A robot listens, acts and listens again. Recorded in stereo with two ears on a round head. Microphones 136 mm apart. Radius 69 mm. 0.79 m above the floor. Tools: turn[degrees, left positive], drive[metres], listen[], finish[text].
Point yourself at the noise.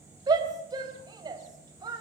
Thought: The shout: about 30° right or 150° right.
Action: turn[-30]
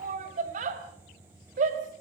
Thought: So it is at 120° right.
Action: turn[-120]
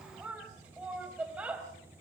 Thought: The shout is now 10° right.
Action: turn[-10]
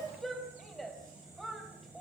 Action: finish[Facing the shout, 2 to 4 m away.]